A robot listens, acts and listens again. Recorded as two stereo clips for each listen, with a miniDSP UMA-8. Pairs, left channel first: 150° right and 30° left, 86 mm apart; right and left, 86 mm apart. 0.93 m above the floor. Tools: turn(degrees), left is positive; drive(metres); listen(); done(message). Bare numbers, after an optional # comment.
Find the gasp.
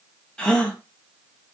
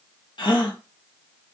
# The gasp: 70° right.
turn(-70)
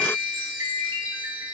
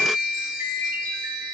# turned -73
done("Facing where the gasp came from. I can't hear it now.")